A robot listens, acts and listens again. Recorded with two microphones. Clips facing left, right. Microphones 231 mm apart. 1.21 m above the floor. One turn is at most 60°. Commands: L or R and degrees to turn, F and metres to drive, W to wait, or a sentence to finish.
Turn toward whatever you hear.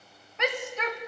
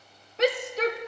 R35
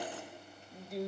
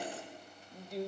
Found it: a shout, straight ahead, under 1 m away.